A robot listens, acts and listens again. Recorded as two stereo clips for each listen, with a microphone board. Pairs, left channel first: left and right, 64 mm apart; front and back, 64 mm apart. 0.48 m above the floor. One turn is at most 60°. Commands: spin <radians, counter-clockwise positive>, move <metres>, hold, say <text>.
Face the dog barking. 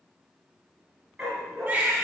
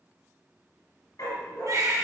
say Facing the dog barking, 1 to 2 m away.